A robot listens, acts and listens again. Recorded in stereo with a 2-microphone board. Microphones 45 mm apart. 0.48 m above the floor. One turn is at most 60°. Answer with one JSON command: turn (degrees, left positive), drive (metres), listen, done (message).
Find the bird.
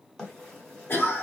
{"turn": 30}
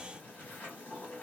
{"turn": 60}
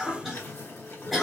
{"turn": 60}
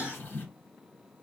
{"turn": 45}
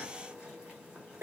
{"turn": -15}
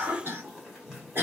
{"done": "Found it: a bird, straight ahead, 1 to 2 m away."}